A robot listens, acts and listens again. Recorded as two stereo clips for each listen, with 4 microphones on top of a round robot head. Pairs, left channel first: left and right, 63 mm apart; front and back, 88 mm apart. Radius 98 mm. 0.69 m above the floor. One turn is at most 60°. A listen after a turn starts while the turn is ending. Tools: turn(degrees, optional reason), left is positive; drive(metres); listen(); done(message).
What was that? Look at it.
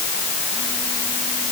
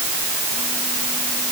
listen()
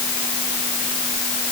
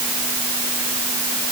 listen()
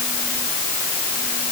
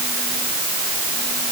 done("I can't make out anything.")